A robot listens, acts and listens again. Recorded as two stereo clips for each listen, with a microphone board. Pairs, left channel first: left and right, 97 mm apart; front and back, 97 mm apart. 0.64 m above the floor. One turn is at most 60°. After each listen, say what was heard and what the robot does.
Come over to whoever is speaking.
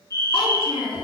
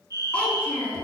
The child speaking: 75° left. Turn 60° left.
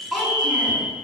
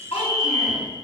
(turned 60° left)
Drive 1.0 m forward.
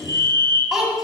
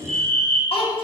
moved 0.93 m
Drive 1.0 m forward.
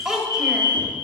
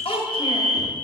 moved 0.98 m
Drive 1.0 m forward.
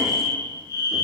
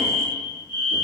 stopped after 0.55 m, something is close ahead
Keep listening.
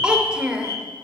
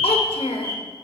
The child speaking is now 10° right. Turn 10° right.
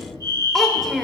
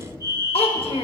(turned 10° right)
I am next to the child speaking.